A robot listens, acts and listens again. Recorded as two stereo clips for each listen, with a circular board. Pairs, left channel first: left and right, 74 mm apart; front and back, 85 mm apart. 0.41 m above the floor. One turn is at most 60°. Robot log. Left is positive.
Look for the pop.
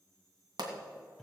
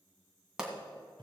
note: The pop: 100° right.
cmd yaw -60
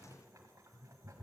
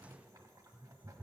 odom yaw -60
note: Nothing new. It was at 40° right.
cmd yaw -40
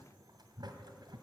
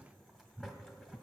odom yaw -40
end: Facing where the pop came from. I can't hear it now.